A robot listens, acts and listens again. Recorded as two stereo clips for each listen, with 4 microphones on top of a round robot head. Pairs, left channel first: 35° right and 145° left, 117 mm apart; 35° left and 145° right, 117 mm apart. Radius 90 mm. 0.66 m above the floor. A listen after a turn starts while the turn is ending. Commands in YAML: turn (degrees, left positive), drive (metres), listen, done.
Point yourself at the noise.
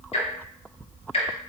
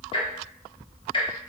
done: "Found it: ticking, straight ahead, 1 to 2 m away."